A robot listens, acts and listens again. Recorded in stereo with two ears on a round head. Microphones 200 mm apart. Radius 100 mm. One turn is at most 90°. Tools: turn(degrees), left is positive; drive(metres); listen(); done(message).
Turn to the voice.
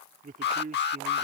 turn(degrees=-35)
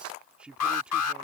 done("Found it: a man speaking, straight ahead.")